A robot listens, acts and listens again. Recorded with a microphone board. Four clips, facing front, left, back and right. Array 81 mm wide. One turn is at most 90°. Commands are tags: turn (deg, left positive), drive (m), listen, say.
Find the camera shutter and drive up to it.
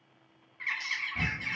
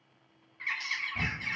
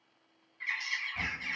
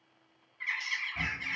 <turn deg="65"/>
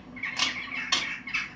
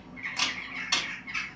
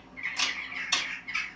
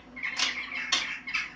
<turn deg="10"/>
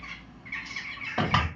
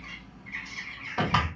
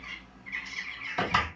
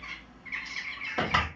<drive m="1.0"/>
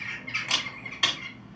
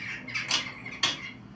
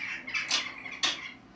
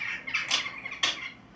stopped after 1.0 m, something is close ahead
<turn deg="-10"/>
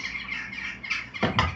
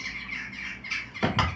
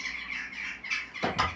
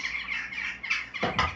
<say>I am next to the camera shutter.</say>